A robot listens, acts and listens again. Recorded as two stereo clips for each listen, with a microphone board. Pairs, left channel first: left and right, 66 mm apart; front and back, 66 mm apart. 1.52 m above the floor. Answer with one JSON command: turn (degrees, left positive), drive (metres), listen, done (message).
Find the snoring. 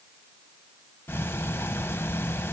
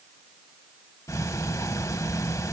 {"listen": true}
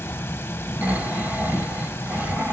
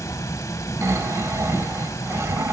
{"turn": -150}
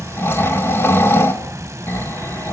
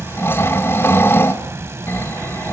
{"turn": 45}
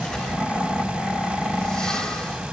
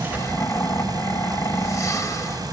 {"turn": 15}
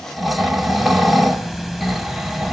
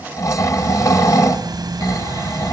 {"done": "Facing the snoring, 1 to 2 m away."}